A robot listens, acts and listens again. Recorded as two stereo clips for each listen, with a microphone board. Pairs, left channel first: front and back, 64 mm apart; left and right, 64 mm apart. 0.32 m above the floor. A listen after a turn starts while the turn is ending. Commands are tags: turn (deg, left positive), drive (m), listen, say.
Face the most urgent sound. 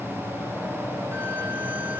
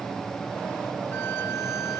<listen/>
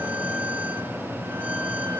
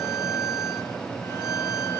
<listen/>
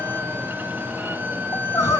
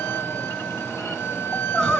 <turn deg="10"/>
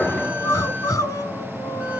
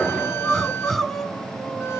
<say>Facing the crying, 1 to 2 m away.</say>